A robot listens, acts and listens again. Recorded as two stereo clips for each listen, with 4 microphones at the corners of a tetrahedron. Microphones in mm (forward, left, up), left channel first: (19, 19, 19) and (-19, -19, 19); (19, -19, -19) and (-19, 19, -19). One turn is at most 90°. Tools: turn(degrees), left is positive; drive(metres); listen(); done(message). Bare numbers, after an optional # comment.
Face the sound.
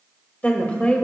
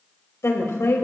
# The woman speaking: 20° right.
turn(-20)
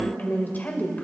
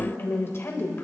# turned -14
# The woman speaking is now 10° right.
turn(-10)
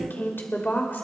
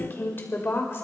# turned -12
# The woman speaking is now 10° right.
turn(-10)
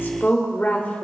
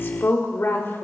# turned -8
# The woman speaking is now 10° right.
turn(-10)
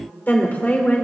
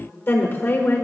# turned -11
# The woman speaking is now 15° right.
turn(-15)
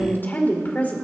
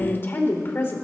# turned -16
# The woman speaking is now 10° right.
turn(-10)
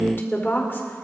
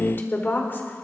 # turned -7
done("Facing the woman speaking, 2 to 4 m away.")